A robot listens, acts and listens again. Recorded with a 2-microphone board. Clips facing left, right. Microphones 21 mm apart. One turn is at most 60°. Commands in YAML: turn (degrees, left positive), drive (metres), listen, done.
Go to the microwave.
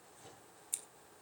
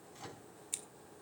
turn: -55
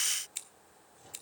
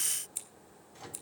turn: -60
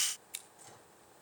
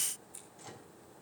turn: -25
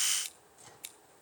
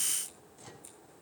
turn: -10
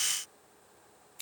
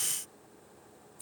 listen: true
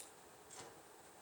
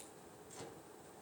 drive: 1.0
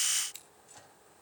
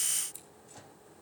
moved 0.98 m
drive: 1.0
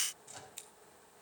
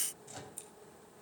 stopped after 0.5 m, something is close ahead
done: "Something is in my way. I am facing the microwave but have not reached it."